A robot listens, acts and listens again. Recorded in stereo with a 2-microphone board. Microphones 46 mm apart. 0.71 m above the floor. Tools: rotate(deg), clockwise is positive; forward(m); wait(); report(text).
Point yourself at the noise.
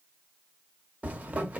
rotate(35)
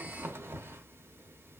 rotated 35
rotate(110)
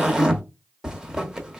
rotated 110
rotate(15)
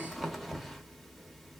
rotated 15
report("Found it: a zipper, straight ahead.")